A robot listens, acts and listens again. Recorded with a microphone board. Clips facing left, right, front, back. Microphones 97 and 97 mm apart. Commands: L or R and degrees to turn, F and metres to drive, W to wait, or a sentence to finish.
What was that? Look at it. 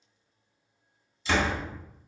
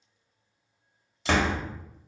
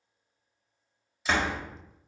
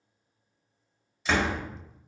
R85
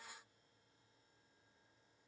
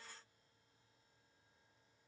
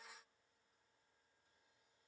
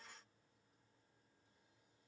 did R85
Facing where the door slam came from. I can't hear it now.